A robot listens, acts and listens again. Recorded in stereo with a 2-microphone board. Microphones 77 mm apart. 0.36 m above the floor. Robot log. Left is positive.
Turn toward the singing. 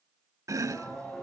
cmd yaw +30
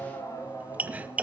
note: So it is at 135° left.
cmd yaw +135
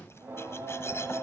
note: The singing is now 25° right.
cmd yaw -25
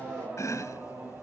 note: The singing is now 20° right.
cmd yaw -20
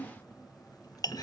end: Facing the singing.